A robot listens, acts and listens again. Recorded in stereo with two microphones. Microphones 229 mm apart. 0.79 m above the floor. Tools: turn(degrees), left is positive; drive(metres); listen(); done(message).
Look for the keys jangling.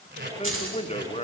turn(degrees=-70)
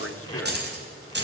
turn(degrees=-50)
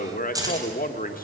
turn(degrees=-15)
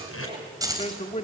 turn(degrees=-15)
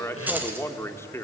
turn(degrees=-10)
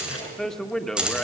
done("Found it: keys jangling, straight ahead, 2 to 4 m away.")